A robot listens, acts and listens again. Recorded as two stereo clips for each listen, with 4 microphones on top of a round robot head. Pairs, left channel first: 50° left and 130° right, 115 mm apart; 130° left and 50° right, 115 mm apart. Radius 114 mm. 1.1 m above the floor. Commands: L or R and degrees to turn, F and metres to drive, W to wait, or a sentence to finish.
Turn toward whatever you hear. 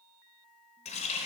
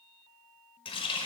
L85
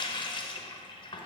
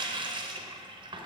Found it: a running tap, straight ahead, under 1 m away.